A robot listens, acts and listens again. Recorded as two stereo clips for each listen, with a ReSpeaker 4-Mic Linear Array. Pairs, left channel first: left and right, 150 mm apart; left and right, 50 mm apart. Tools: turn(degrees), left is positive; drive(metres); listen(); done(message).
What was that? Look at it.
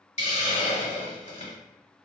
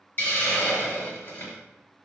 turn(degrees=50)
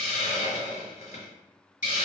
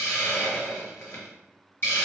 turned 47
turn(degrees=75)
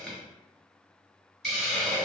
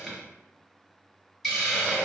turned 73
done("Found it: a hiss, straight ahead, 1 to 2 m away.")